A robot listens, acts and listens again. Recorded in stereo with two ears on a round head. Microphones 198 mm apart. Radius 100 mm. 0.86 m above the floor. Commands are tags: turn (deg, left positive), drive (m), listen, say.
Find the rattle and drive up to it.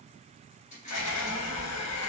<turn deg="35"/>
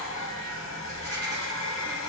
<listen/>
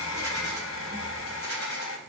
<listen/>
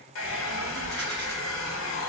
<say>I heard a rattle, but can't make it out now. It was about straight ahead or 110° left. I did not reach it.</say>